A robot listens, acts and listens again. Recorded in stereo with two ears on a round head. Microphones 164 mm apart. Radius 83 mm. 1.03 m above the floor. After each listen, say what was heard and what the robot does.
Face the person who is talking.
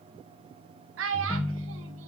The child speaking: about 75° right or 105° right. Turn 75° right.
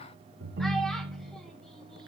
Keep listening.
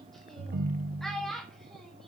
Facing the child speaking.